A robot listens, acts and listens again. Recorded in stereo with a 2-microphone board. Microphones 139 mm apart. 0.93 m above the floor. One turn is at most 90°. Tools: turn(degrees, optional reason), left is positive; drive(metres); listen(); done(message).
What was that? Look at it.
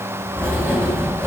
turn(degrees=-20, reason="The writing: about 20° right or 160° right.")
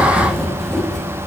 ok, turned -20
done("Found it: writing, straight ahead, over 4 m away.")